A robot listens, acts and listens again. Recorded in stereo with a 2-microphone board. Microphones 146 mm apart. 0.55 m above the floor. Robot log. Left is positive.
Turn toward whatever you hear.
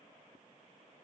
cmd idle
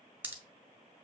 cmd yaw -30
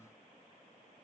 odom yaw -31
cmd idle
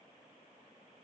end: I heard a pop, but can't make it out now. It was about 15° left or 135° right.